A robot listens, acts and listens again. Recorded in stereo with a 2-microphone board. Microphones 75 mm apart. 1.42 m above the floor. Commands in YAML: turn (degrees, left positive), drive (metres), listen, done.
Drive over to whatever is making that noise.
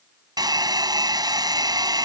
turn: -65
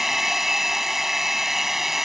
drive: 1.0
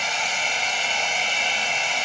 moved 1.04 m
drive: 1.0
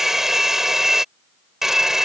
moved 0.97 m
turn: -10
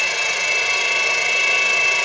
drive: 1.0
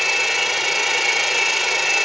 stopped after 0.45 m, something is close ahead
done: "Arrived at the hair dryer, straight ahead."